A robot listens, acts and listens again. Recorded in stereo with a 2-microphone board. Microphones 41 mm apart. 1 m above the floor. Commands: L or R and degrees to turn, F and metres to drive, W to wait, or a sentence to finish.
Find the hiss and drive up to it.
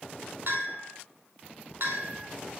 W
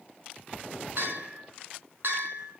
W
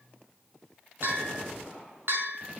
I can't make out a hiss to turn to.